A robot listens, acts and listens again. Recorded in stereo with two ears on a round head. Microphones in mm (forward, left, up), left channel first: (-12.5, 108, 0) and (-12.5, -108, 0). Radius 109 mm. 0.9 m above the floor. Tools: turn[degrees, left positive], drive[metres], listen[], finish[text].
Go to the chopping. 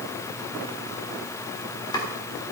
Thought: The chopping: about 20° left or 160° left.
Action: turn[20]
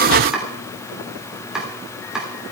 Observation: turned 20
Action: drive[1.0]
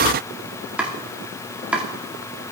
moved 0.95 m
Action: drive[1.0]
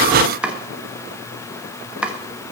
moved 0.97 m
Action: drive[1.0]
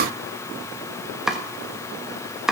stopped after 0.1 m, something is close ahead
Action: finish[Arrived at the chopping, straight ahead.]